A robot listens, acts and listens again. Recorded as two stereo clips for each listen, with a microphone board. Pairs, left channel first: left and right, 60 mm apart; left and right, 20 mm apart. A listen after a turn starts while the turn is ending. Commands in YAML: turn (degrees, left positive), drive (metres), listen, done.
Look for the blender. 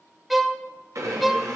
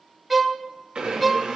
turn: -60
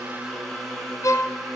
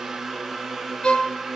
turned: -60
done: "Facing the blender."